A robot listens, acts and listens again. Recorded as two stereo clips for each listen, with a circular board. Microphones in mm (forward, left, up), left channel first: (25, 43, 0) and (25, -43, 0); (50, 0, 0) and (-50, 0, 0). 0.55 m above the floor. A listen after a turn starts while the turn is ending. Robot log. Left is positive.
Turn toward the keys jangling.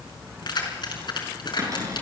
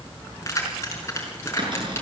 note: The keys jangling: 65° left.
cmd yaw +65
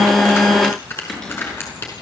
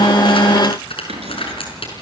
note: The keys jangling is now 25° left.
cmd yaw +25
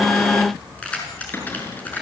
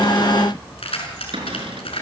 note: The keys jangling is now 20° left.
cmd yaw +20
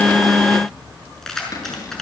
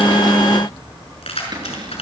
end: Found it: keys jangling, straight ahead.